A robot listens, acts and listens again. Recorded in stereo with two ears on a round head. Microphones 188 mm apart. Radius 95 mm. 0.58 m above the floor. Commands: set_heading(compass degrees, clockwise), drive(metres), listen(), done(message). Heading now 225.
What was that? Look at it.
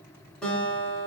set_heading(195)
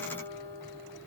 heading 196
set_heading(51)
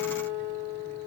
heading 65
set_heading(50)
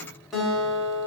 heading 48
done("Found it: a guitar, straight ahead, 2 to 4 m away.")